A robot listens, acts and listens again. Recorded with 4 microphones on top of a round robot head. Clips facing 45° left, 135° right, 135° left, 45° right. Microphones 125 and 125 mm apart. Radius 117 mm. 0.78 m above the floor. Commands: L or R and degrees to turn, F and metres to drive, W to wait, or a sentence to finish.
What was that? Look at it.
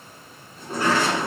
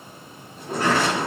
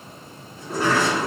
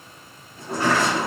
R75
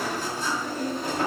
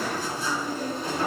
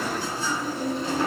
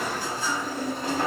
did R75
Found it: a sliding door, straight ahead.